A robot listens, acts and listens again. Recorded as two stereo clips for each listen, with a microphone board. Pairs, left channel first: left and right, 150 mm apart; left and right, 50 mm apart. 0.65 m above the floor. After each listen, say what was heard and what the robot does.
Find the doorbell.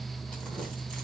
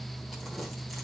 Keep listening.
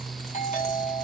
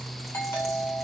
The doorbell: about 45° left or 135° left. Turn 45° left.
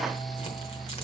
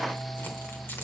Keep listening.
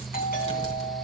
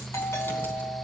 So it is at 90° left. Turn 90° left.
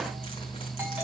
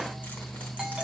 Keep listening.
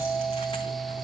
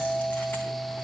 The doorbell is now 10° right. Turn 10° right.
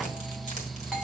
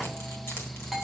Facing the doorbell.